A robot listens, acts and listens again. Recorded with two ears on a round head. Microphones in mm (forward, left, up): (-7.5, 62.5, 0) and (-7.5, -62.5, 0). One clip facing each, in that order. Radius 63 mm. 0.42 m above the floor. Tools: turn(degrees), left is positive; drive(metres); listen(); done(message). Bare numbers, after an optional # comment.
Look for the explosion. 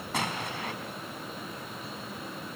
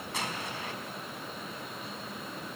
# The explosion: about 50° left or 130° left.
turn(50)
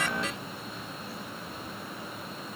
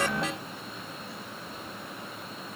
listen()
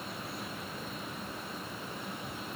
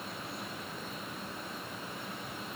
done("I heard an explosion, but can't make it out now. It was about straight ahead or 80° left.")